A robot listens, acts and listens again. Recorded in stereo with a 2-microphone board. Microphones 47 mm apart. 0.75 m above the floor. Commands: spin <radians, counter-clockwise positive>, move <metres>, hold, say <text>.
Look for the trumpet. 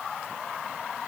hold
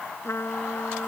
spin 1.31
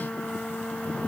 spin 0.52
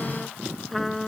say Found it: a trumpet, straight ahead.